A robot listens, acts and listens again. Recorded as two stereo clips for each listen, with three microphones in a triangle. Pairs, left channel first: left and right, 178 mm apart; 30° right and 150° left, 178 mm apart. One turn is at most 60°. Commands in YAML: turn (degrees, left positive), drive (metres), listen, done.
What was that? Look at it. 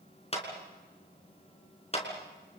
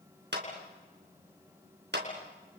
turn: 60
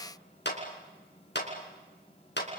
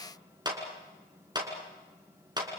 turn: 60
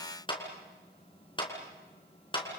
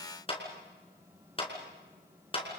turn: 25
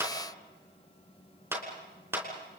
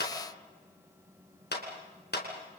turn: -15
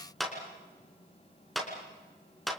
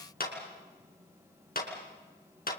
done: "Found it: a clap, straight ahead."